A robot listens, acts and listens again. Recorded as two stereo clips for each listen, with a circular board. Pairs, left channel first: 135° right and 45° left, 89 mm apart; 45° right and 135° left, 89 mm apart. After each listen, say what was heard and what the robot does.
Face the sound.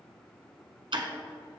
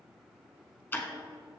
The ticking: 20° left. Turn 20° left.
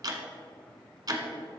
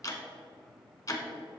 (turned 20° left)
Found it: ticking, straight ahead, 1 to 2 m away.